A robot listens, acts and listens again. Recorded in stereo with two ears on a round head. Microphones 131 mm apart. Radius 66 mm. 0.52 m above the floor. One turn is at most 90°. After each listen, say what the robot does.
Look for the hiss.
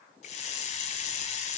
Turn 50° left.
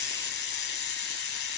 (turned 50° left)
Turn 80° left.
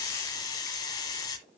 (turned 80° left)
Turn 25° left.
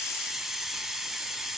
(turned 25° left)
Found it: a hiss, straight ahead.